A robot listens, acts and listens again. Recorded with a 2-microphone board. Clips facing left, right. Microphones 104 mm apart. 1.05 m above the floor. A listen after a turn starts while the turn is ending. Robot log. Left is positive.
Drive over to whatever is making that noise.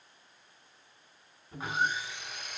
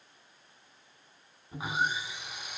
cmd yaw -30
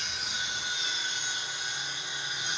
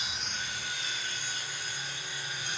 note: So it is at 20° left.
cmd yaw +20
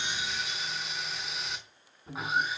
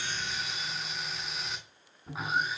cmd fwd 1.0
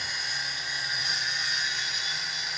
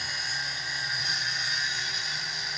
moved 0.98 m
cmd fwd 1.0
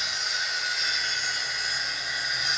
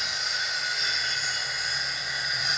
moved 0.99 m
cmd fwd 1.0
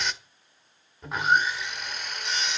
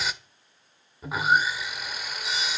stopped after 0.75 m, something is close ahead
end: Arrived at the sawing, straight ahead.